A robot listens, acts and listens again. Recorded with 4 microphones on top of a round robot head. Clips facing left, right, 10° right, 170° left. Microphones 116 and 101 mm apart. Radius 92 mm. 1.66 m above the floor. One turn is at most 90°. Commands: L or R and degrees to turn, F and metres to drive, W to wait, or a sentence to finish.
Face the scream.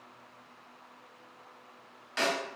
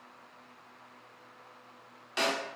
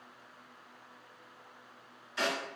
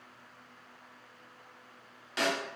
W
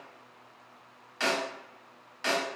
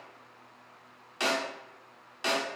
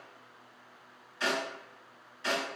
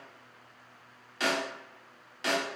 W
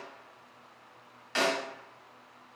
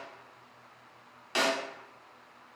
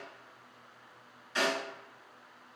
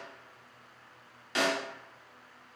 I can't make out a scream, only a snare drum.